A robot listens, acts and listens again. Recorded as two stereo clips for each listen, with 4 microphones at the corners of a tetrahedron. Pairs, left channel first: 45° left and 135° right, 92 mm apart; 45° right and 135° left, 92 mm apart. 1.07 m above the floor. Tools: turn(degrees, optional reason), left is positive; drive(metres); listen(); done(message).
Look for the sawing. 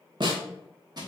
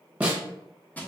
listen()
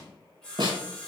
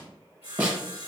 turn(degrees=-35, reason="The sawing: 35° right.")
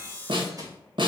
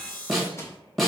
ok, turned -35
turn(degrees=-20, reason="The sawing is now 20° right.")
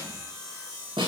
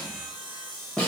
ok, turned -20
done("Facing the sawing.")